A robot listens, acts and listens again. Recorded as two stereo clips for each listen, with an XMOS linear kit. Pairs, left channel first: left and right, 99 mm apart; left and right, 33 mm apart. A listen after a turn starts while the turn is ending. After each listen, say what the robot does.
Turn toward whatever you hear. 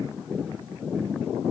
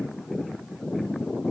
Keep listening.
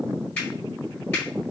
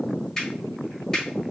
Turn 20° left.
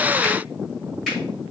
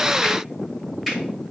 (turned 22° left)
Found it: a finger snap, straight ahead, 1 to 2 m away.